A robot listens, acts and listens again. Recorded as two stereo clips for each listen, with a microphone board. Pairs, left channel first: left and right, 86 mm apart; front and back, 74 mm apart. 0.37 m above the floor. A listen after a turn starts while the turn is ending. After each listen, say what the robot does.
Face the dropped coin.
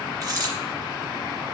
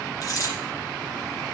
Turn 45° right.
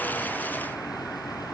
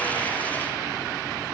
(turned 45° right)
Facing where the dropped coin came from. I can't hear it now.